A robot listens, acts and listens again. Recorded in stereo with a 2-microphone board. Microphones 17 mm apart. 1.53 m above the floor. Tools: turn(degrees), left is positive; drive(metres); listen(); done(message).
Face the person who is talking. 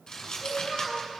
turn(degrees=-45)
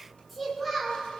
done("Found it: a child speaking, straight ahead.")